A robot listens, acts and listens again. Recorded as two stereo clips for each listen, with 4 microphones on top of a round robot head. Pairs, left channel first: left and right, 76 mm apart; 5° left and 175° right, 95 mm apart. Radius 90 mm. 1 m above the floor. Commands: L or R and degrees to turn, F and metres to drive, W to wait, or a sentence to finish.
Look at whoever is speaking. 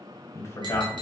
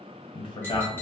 L40
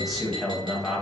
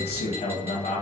Facing the man speaking, 1 to 2 m away.